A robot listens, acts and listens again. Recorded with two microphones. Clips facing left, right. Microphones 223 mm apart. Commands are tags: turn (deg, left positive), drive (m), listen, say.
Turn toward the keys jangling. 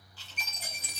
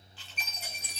<turn deg="70"/>
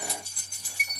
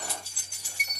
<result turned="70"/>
<turn deg="-10"/>
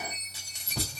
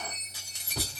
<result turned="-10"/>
<say>Facing the keys jangling.</say>